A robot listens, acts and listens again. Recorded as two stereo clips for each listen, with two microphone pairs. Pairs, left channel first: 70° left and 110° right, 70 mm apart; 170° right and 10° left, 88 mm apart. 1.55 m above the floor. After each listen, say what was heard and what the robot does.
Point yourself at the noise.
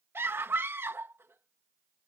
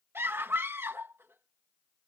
The scream: 55° right. Turn 55° right.
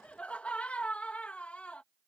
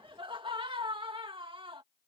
Facing the scream.